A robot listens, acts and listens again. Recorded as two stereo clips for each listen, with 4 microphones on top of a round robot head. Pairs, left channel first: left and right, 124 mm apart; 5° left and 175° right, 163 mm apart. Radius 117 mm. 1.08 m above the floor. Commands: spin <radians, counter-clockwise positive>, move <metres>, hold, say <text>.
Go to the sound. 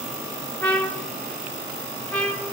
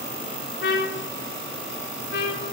spin 0.17
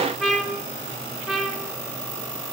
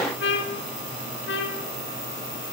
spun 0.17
move 1.0
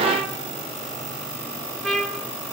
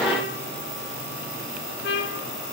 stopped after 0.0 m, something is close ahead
say Blocked. The trumpet is further on, straight ahead.